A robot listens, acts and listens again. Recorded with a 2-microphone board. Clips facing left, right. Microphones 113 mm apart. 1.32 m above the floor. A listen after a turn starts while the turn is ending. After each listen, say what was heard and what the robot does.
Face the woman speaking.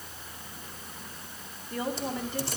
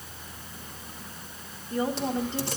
The woman speaking: about 25° right or 155° right. Turn 25° right.
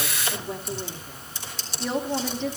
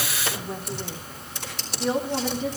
Facing the woman speaking, 2 to 4 m away.